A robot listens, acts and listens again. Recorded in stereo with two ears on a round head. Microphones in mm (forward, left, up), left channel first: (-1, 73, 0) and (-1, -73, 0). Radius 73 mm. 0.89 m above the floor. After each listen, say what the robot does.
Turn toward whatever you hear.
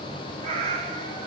Turn 40° right.
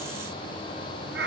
Turn 95° right.
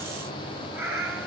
Turn 10° right.
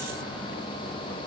Keep listening.
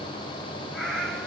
Found it: a cat meowing, straight ahead, 2 to 4 m away.